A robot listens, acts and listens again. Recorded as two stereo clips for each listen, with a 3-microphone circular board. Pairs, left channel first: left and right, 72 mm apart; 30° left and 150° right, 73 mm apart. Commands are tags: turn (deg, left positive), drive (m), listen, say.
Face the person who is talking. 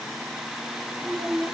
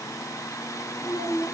<turn deg="-15"/>
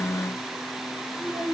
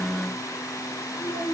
<say>Facing the child speaking, over 4 m away.</say>